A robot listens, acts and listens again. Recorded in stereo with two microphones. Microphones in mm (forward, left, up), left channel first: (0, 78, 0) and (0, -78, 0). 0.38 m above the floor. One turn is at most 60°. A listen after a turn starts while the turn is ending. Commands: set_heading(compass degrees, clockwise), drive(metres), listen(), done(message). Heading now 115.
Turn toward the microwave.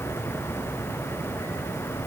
listen()
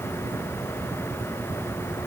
listen()
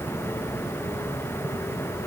done("I can't make out a microwave to turn to.")